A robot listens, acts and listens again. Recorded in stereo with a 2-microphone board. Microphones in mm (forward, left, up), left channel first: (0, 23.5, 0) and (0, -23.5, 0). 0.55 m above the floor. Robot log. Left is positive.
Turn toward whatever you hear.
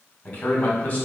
note: The man speaking: about 30° left or 150° left.
cmd yaw +30
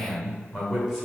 note: So it is at 10° right.
cmd yaw -10
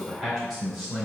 note: The man speaking is now 10° right.
cmd yaw -10
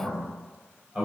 note: The man speaking is now 10° right.
cmd yaw -10
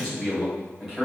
end: Found it: a man speaking, straight ahead.